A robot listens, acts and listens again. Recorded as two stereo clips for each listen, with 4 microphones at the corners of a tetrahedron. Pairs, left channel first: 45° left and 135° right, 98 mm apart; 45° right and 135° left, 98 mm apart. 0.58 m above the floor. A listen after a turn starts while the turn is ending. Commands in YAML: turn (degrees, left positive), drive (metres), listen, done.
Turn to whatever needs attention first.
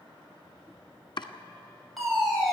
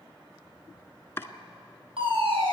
turn: 135
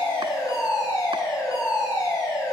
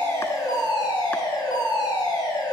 done: "Found it: a fire alarm, straight ahead."